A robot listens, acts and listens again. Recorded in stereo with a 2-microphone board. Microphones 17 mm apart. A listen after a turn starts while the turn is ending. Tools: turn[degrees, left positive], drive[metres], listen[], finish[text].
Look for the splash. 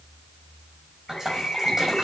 Thought: The splash: about 30° right or 150° right.
Action: turn[-30]
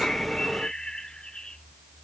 Action: listen[]
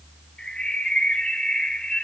Action: finish[I heard a splash, but can't make it out now. It was about straight ahead or 120° right.]